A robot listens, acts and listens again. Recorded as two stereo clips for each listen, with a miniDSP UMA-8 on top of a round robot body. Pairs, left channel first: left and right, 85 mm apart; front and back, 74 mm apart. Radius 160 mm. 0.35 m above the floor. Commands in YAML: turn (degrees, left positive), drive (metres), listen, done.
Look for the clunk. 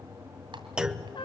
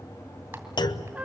turn: -10
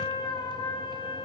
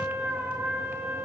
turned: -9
done: "I heard a clunk from this way, but can't make it out now."